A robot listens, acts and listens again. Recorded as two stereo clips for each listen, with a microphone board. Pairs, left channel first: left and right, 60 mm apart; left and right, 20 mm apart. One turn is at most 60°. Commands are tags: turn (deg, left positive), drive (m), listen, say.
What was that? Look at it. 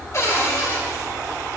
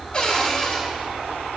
<turn deg="55"/>
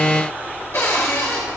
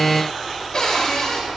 <turn deg="55"/>
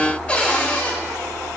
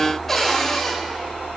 <turn deg="25"/>
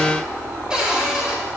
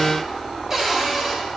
<turn deg="-15"/>
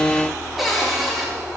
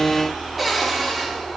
<say>Found it: a cupboard door, straight ahead.</say>